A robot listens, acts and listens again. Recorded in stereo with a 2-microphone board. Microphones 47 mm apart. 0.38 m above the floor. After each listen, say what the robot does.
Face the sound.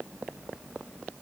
Keep listening.
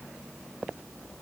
Keep listening.
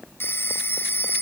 Turn 60° left.
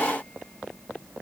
Keep listening.
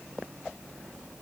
Keep listening.
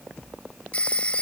Turn 30° left.
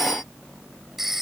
Turn 10° right.
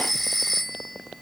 Facing the phone ringing.